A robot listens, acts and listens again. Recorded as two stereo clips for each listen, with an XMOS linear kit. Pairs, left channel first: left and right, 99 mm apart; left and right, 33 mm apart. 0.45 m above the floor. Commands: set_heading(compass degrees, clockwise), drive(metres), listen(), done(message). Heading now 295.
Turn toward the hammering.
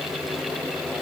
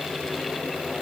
listen()
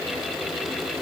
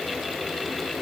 listen()
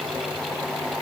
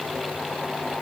done("I can't make out hammering to turn to.")